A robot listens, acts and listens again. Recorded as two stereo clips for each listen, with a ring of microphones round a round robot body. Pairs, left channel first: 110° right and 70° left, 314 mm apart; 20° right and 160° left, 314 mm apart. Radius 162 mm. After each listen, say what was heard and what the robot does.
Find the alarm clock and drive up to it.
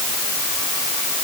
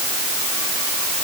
Keep listening.
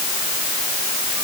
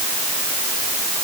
Keep listening.
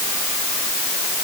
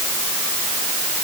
I can't make out an alarm clock.